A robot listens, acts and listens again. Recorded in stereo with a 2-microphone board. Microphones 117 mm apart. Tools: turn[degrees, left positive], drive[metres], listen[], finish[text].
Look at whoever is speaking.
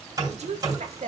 Action: turn[-90]
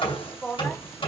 Action: finish[Found it: a woman speaking, straight ahead.]